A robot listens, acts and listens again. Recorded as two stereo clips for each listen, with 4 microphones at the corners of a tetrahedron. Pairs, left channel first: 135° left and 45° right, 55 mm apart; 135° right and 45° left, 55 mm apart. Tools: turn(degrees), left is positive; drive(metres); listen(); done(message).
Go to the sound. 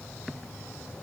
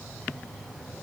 listen()
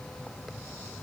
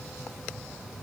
listen()
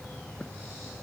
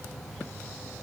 done("I can't make out anything to turn to.")